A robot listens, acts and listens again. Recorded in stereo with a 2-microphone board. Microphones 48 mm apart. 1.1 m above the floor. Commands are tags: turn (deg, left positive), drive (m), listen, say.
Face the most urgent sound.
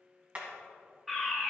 <turn deg="30"/>
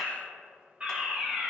<turn deg="-30"/>
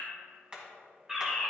<turn deg="-10"/>
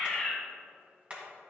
<say>Facing the fire alarm.</say>